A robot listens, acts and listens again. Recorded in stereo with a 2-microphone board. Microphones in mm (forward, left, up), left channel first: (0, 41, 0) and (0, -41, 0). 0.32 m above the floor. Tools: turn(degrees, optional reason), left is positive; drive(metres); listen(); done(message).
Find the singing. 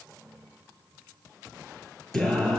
turn(degrees=30)
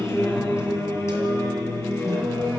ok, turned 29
turn(degrees=140, reason="So it is at 140° left.")
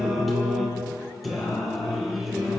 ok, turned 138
done("Facing the singing.")